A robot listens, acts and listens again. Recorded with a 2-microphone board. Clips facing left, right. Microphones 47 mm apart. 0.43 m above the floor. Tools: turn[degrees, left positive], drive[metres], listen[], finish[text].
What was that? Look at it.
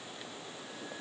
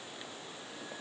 Action: listen[]
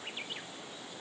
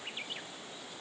Action: listen[]
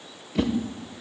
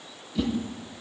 Thought: The whoosh: about 60° left or 120° left.
Action: turn[60]
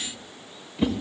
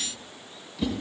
Thought: So it is at 35° left.
Action: turn[35]
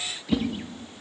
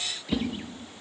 Action: finish[Facing the whoosh.]